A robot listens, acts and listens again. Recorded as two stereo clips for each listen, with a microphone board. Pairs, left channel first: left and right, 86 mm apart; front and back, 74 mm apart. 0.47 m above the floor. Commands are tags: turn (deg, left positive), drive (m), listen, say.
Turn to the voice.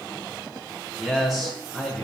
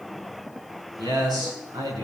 <turn deg="-175"/>
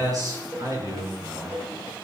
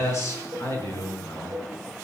<turn deg="-45"/>
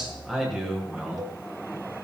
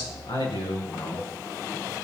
<say>Facing the man speaking.</say>